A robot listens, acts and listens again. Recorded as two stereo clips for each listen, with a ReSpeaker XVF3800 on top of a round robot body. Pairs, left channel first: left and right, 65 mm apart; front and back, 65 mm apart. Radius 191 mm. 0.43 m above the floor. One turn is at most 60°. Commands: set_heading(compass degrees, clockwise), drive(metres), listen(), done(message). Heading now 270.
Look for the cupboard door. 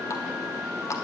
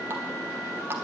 listen()
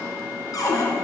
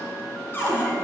set_heading(210)
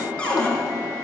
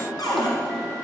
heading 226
set_heading(211)
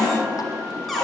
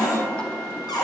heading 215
done("Facing the cupboard door.")